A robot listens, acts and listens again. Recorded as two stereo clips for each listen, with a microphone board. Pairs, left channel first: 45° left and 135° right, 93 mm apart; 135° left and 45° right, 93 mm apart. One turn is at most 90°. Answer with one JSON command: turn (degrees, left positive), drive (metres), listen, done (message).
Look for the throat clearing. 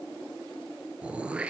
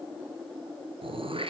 {"turn": -60}
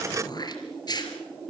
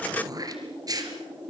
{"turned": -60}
{"done": "Facing the throat clearing."}